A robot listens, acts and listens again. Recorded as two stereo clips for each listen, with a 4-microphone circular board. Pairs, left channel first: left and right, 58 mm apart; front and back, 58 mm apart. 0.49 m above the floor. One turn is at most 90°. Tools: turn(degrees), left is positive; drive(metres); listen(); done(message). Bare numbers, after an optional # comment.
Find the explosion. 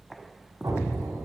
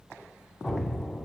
# The explosion: 95° right.
turn(-90)
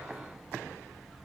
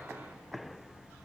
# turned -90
done("I heard an explosion from this way, but can't make it out now.")